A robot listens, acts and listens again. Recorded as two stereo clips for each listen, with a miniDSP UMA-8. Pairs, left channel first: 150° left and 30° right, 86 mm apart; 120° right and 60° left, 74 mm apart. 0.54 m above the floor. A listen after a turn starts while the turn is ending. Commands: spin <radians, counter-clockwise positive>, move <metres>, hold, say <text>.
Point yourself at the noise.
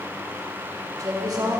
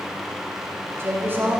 say Found it: a woman speaking, straight ahead.